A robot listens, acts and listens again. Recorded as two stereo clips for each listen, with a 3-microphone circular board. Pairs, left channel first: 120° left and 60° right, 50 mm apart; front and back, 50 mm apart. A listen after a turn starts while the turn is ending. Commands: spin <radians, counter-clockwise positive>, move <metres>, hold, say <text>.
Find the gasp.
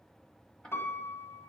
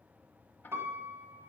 hold
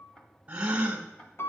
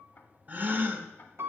spin -2.18
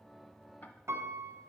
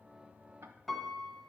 say I heard a gasp from this way, but can't make it out now.